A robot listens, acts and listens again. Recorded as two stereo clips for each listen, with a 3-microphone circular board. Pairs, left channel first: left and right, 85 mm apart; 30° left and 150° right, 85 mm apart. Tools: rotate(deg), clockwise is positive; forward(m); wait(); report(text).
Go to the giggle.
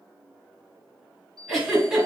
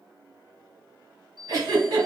rotate(-180)
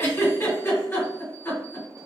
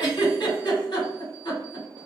rotate(-35)
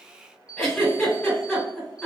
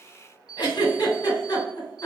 forward(1.0)
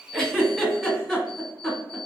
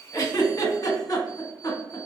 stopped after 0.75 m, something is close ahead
report("Arrived at the giggle, straight ahead.")